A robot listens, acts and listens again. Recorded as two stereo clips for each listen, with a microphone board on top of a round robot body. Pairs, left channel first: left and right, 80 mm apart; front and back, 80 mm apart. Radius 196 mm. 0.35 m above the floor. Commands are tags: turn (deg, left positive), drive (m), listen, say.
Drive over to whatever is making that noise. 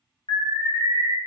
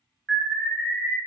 <turn deg="80"/>
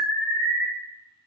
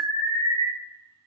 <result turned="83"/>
<drive m="1.0"/>
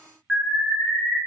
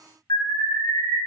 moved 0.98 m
<turn deg="-10"/>
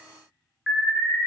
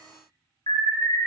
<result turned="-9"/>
<drive m="1.0"/>
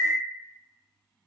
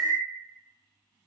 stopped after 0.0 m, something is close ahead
<say>Arrived at the alarm, straight ahead.</say>